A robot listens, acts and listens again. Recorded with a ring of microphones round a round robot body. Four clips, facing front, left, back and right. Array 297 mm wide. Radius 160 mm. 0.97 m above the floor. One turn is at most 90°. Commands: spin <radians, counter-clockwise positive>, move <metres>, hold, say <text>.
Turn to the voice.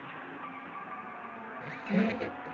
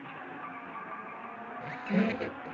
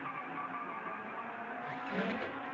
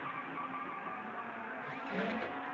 hold
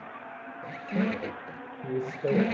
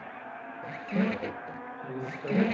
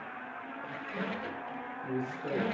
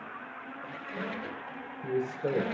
spin -0.61
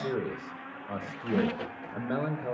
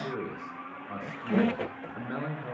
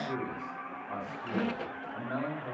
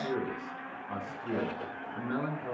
say Facing the man speaking, over 4 m away.